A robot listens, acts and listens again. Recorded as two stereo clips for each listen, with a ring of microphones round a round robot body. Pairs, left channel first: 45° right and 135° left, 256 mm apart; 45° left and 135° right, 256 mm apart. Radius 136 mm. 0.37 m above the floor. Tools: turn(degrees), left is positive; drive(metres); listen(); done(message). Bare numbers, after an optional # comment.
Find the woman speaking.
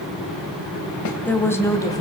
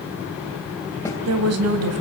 # The woman speaking: 120° right.
turn(-120)
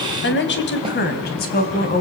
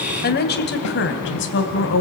# The woman speaking is now 10° left.
turn(10)
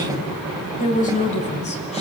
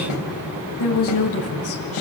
# The woman speaking is now 15° left.
turn(15)
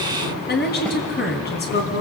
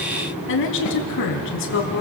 done("Found it: a woman speaking, straight ahead.")